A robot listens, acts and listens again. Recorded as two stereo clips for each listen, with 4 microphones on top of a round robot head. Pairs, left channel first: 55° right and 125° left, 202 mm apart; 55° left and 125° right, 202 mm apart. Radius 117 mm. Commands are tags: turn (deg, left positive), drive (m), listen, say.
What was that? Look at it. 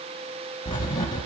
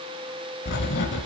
<turn deg="15"/>
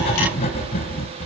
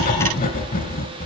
<say>Facing the writing, under 1 m away.</say>